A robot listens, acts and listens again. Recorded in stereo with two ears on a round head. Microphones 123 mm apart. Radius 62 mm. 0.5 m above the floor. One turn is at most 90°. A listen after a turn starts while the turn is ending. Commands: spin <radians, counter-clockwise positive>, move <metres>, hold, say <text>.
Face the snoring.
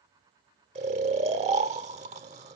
spin -0.87
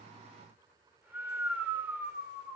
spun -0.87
spin -0.26
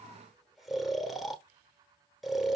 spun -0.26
say Facing the snoring, under 1 m away.